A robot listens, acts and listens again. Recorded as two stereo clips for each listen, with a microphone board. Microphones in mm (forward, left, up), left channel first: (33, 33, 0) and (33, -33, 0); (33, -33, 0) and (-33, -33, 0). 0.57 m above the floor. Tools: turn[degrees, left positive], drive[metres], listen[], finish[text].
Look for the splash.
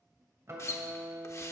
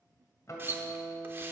Thought: The splash: 130° left.
Action: turn[130]
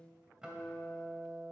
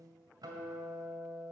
Action: finish[Facing where the splash came from. I can't hear it now.]